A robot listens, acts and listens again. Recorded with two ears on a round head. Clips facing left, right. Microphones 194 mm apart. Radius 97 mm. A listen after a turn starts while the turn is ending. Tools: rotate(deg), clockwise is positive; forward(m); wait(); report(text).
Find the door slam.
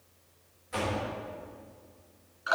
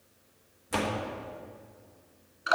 rotate(70)
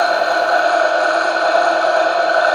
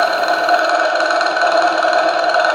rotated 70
wait()
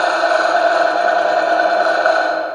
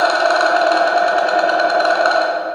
report("I heard a door slam, but can't make it out now. It was about straight ahead or 40° right.")